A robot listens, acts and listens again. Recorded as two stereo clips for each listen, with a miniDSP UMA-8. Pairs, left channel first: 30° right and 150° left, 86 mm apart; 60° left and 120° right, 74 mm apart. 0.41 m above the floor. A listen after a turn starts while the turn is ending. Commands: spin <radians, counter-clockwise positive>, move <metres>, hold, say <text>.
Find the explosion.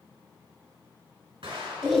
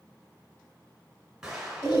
spin 2.79
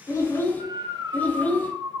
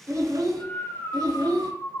say I heard an explosion from this way, but can't make it out now.